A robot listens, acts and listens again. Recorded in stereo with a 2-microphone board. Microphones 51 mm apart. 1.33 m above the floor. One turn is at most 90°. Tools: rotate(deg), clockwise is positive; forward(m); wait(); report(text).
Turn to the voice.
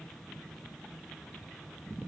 wait()
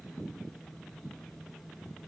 wait()
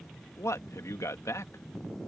rotate(-90)
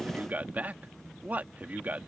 rotate(30)
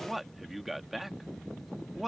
report("Facing the man speaking.")